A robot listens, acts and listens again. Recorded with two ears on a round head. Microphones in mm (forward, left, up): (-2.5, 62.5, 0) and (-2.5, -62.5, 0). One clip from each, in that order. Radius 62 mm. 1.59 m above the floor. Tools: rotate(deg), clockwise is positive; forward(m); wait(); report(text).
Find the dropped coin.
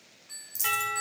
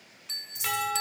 rotate(-60)
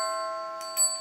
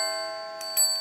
wait()
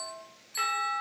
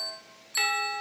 report("I heard a dropped coin, but can't make it out now. It was about straight ahead or 60° left.")